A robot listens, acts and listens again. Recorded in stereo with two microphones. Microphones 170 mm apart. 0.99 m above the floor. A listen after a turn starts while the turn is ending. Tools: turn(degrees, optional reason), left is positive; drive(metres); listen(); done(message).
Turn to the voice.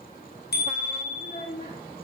turn(degrees=60, reason="The child speaking: about 60° left or 120° left.")
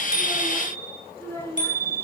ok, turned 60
turn(degrees=15, reason="So it is at 15° left.")
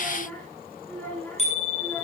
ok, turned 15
turn(degrees=10, reason="The child speaking is now 10° left.")
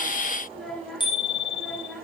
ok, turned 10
done("Facing the child speaking.")